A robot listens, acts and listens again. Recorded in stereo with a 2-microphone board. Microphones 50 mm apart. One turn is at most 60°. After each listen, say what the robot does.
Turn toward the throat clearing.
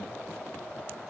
Keep listening.
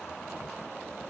Keep listening.
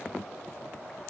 I can't make out throat clearing to turn to.